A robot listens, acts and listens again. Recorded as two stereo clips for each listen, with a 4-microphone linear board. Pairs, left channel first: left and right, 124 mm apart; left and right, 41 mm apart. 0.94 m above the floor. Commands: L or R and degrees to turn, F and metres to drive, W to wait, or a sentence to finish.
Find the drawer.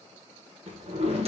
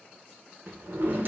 R50
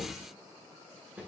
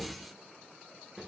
R10
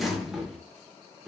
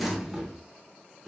Facing the drawer, under 1 m away.